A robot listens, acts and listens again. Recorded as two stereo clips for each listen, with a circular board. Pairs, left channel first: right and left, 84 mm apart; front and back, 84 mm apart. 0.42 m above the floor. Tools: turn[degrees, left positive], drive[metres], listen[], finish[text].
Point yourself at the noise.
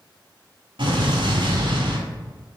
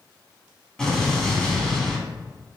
Thought: The explosion: 85° left.
Action: turn[85]
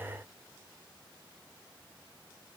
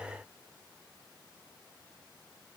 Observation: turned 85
Action: finish[Facing where the explosion came from. I can't hear it now.]